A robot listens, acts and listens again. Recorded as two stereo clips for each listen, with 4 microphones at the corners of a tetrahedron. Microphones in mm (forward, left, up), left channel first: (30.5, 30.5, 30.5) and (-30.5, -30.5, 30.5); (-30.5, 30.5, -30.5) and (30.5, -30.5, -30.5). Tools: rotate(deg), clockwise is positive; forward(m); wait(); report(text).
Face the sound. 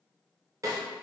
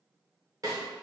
rotate(90)
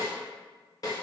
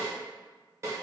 report("Found it: a snare drum, straight ahead.")